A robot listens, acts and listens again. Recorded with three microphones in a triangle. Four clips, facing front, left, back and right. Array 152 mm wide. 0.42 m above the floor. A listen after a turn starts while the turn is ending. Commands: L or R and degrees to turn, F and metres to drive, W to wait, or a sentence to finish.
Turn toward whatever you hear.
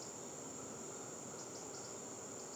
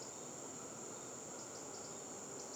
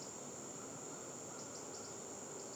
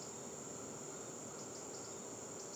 W
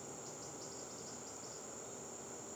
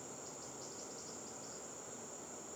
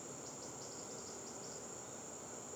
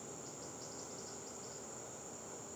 W
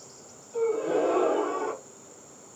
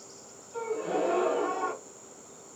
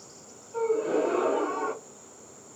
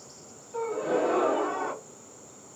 R80
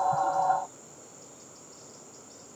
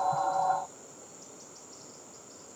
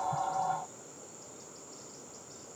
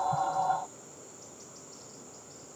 I heard a gasp from this way, but can't make it out now.